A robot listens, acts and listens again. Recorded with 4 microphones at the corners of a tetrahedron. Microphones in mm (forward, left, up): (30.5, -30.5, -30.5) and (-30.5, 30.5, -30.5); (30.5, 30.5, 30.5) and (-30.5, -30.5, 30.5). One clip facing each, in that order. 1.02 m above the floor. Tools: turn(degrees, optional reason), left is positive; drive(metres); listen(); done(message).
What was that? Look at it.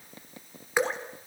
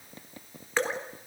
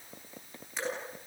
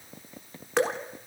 turn(degrees=-120, reason="The dripping: 120° right.")
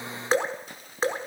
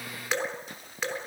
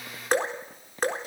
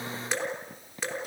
done("Facing the dripping.")